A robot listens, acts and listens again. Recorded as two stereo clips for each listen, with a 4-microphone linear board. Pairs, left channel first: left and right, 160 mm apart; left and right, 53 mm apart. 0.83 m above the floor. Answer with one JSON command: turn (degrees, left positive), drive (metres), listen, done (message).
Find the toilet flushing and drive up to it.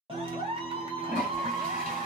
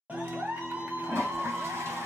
{"turn": -65}
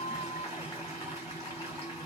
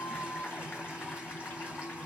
{"listen": true}
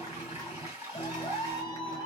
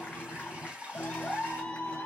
{"turn": -20}
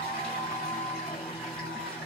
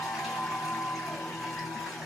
{"listen": true}
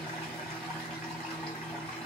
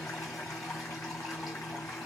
{"listen": true}
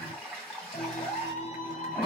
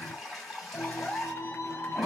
{"drive": 1.0}
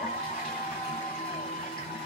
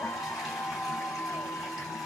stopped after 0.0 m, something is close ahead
{"listen": true}
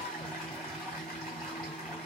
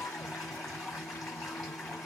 {"done": "Blocked. The toilet flushing is further on, straight ahead."}